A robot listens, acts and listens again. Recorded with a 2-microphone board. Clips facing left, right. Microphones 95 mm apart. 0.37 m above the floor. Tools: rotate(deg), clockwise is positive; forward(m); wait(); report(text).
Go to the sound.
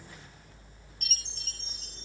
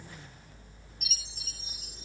rotate(30)
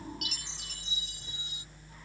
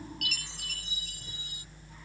rotate(-25)
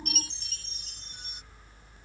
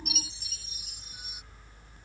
forward(1.0)
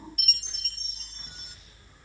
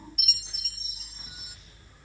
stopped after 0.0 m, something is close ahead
report("Blocked. The chime is further on, straight ahead.")